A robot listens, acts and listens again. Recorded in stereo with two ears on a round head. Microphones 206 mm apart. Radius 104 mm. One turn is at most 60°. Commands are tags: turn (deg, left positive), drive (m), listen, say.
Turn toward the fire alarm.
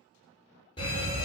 <turn deg="25"/>
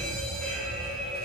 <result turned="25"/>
<say>Found it: a fire alarm, straight ahead.</say>